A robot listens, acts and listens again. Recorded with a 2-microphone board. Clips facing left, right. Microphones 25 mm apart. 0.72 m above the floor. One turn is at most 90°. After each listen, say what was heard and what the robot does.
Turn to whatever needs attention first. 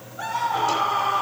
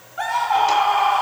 Turn 90° right.
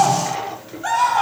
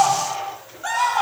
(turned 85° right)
So it is at 10° left. Turn 10° left.
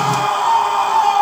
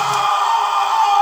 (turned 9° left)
Found it: a scream, straight ahead.